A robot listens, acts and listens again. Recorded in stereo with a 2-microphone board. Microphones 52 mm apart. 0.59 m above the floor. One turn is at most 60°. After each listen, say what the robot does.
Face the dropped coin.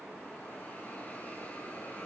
Keep listening.
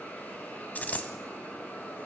Turn 30° left.
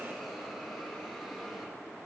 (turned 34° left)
Keep listening.
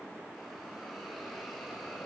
I heard a dropped coin, but can't make it out now. It was about 5° right or 115° left.